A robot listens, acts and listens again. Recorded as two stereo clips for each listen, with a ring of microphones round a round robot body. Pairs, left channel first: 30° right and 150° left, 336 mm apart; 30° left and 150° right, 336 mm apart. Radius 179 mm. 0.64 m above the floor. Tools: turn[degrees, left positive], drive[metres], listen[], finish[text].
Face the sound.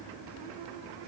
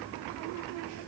Action: listen[]
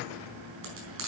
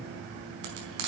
Thought: The frying: 155° right.
Action: turn[-155]
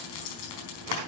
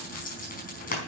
Thought: The frying is now 35° right.
Action: turn[-35]
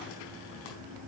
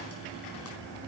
Action: listen[]
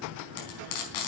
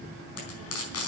Thought: The frying is now 20° right.
Action: turn[-20]
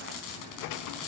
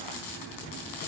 Action: finish[Facing the frying, over 4 m away.]